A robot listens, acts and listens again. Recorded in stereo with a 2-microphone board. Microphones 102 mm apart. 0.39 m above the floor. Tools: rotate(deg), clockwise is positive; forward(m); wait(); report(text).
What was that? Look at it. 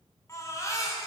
rotate(-30)
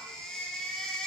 report("Facing the baby crying.")